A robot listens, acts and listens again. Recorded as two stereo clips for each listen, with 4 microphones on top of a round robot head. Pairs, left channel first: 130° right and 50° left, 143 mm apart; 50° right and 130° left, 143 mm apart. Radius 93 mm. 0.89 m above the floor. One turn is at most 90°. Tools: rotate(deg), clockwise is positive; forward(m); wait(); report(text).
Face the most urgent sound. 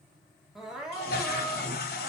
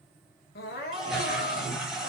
rotate(40)
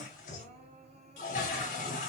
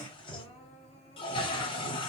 report("Facing the crying.")